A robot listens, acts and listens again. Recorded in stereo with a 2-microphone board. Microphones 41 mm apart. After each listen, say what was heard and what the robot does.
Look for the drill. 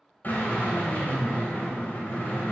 The drill: about 45° left or 135° left. Turn 45° left.
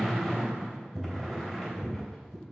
Found it: a drill, straight ahead.